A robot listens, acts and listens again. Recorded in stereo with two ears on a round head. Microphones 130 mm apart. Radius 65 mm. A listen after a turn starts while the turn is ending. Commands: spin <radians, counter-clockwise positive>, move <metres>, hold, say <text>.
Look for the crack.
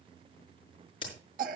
spin 0.61
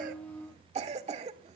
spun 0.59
hold
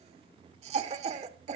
say I heard a crack, but can't make it out now. It was about straight ahead or 110° left.